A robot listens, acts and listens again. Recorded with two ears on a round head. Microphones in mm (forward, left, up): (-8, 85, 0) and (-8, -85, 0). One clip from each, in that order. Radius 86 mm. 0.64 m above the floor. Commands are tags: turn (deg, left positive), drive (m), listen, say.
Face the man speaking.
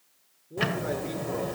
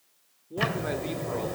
<turn deg="-65"/>
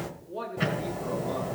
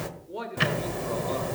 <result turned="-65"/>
<turn deg="-45"/>
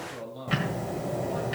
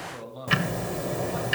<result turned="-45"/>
<say>Facing the man speaking.</say>